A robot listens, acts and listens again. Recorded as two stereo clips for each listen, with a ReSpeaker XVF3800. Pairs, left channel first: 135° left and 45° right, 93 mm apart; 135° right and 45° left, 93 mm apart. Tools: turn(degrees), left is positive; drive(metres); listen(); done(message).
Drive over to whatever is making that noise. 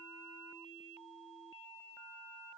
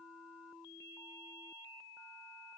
listen()
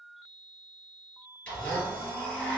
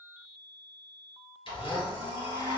turn(degrees=-155)
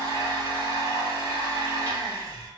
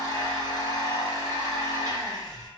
drive(metres=1.0)
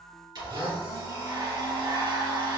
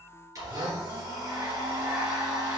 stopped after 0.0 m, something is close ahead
turn(degrees=-10)
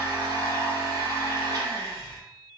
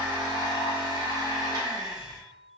done("Something is in my way. I am facing the blender but have not reached it.")